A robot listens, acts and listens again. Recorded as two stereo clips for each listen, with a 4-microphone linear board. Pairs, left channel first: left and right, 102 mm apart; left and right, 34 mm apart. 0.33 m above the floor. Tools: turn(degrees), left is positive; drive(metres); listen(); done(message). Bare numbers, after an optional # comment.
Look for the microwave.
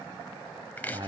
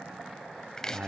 listen()
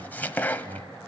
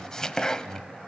listen()
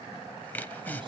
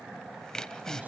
done("I can't make out a microwave to turn to.")